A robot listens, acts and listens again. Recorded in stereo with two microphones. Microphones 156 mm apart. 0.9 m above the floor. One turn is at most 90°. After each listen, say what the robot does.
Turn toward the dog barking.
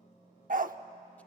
Turn 60° right.
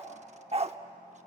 Turn 45° right.
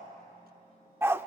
Turn 15° right.
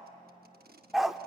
Found it: a dog barking, straight ahead.